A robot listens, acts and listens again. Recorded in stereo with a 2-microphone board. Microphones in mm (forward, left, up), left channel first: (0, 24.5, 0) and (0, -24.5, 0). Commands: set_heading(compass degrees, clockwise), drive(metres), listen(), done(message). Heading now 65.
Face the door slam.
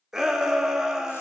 listen()
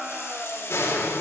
set_heading(0)
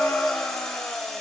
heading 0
listen()
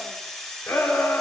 done("I heard a door slam, but can't make it out now. It was about straight ahead or 50° left.")